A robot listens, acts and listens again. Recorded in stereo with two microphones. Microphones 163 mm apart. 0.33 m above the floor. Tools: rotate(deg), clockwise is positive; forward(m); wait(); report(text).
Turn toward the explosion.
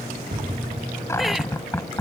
rotate(90)
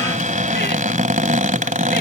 report("Facing where the explosion came from. I can't hear it now.")